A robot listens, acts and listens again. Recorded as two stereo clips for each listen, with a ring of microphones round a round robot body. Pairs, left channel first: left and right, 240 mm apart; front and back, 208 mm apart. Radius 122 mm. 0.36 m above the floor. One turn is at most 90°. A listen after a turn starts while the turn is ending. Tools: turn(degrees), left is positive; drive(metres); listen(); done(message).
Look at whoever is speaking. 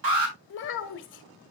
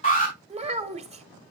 turn(degrees=90)
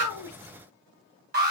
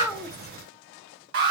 turn(degrees=35)
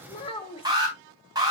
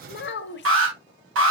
turn(degrees=25)
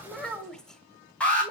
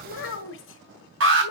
done("Facing the child speaking.")